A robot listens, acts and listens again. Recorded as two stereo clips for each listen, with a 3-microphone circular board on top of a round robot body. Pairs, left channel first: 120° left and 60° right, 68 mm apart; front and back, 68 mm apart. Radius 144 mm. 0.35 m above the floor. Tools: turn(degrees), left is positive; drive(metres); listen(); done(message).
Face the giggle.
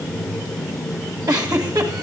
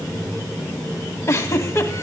turn(degrees=-45)
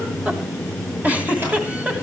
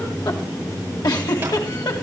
done("Found it: a giggle, straight ahead, 2 to 4 m away.")